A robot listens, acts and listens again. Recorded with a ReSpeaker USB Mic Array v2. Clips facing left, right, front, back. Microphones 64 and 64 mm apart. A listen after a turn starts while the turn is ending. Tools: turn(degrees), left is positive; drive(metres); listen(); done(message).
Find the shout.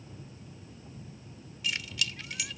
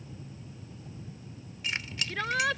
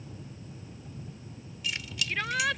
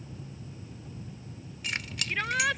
turn(degrees=-95)
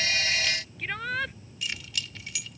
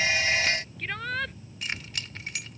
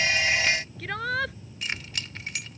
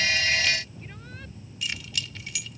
done("Facing the shout.")